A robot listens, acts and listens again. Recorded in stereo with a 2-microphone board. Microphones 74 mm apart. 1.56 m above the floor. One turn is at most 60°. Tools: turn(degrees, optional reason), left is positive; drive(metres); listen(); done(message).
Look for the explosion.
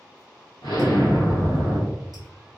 turn(degrees=60, reason="The explosion: about 70° left or 110° left.")
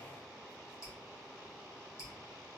listen()
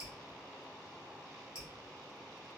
done("I heard an explosion, but can't make it out now. It was about 10° left or 50° left.")